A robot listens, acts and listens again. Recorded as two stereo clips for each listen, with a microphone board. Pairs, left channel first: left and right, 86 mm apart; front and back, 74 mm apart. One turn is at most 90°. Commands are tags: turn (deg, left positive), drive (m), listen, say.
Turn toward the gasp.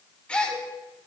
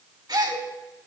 <turn deg="90"/>
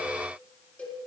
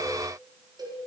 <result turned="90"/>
<turn deg="80"/>
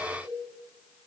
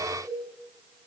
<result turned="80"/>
<say>Facing where the gasp came from. I can't hear it now.</say>